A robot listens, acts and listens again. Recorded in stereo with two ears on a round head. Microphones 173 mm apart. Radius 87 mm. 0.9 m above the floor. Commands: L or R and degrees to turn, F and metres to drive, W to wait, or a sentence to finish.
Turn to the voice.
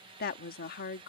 L50
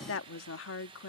L75
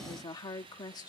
L20
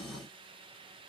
W
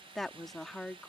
Facing the woman speaking.